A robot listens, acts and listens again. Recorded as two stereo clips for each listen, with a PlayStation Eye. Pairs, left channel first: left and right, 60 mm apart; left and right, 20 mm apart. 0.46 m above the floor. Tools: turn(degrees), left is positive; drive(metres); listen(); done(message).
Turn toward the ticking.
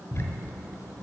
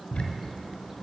turn(degrees=55)
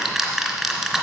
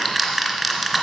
done("Facing the ticking, 1 to 2 m away.")